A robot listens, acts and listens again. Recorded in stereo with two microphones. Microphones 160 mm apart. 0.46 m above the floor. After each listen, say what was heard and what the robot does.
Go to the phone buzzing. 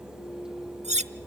Keep listening.
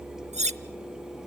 Keep listening.
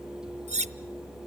I can't make out a phone buzzing to turn to.